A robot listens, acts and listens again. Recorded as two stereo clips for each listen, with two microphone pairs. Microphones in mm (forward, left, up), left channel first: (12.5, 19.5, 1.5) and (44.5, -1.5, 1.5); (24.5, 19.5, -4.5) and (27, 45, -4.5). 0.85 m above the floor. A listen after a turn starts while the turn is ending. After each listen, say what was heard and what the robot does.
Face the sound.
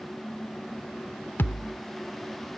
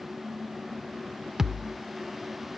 The thud: 150° left. Turn 150° left.
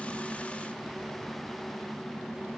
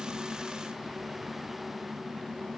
Facing where the thud came from. I can't hear it now.